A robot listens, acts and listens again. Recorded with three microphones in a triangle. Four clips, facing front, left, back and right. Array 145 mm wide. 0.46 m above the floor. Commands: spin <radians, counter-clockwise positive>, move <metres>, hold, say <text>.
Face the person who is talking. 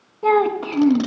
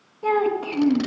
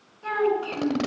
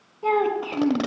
spin -0.17
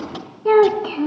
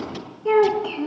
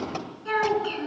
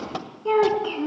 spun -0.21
say Found it: a child speaking, straight ahead.